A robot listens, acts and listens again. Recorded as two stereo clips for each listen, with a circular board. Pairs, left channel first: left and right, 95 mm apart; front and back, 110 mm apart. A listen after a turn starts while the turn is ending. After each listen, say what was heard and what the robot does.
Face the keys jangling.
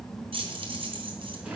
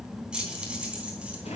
The keys jangling: 100° right. Turn 100° right.
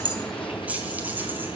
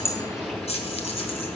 The keys jangling is now 20° right. Turn 20° right.
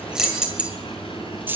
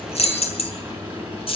The keys jangling is now 25° right. Turn 25° right.
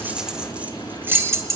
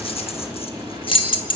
The keys jangling is now 35° right. Turn 35° right.
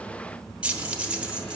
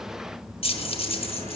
The keys jangling is now 15° right. Turn 15° right.
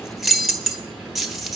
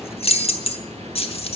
Facing the keys jangling.